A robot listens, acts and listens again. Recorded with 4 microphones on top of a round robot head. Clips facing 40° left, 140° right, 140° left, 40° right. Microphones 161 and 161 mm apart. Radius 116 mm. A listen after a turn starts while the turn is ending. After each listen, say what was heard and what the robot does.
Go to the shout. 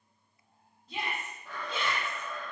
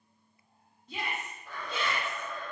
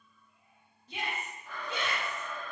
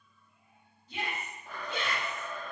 The shout: 130° left. Turn 130° left.
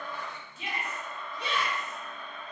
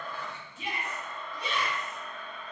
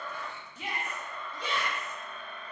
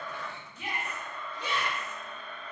The shout is now 65° left. Turn 65° left.
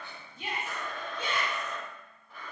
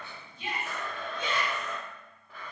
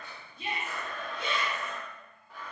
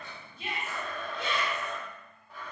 The shout is now 15° right. Turn 15° right.
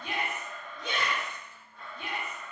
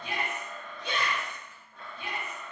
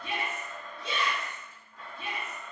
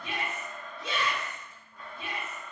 Drive 1.0 m forward.
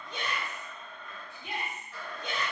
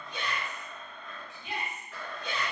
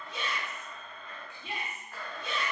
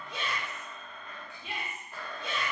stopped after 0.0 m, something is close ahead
Something is in my way. I am facing the shout but have not reached it.